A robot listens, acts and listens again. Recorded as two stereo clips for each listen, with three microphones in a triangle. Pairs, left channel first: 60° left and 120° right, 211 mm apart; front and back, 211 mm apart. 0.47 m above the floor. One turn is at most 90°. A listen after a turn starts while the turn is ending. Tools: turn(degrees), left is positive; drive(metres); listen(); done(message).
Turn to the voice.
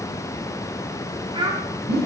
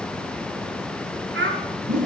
turn(degrees=90)
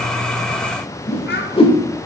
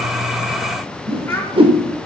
turn(degrees=75)
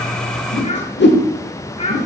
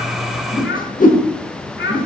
done("Found it: a child speaking, straight ahead.")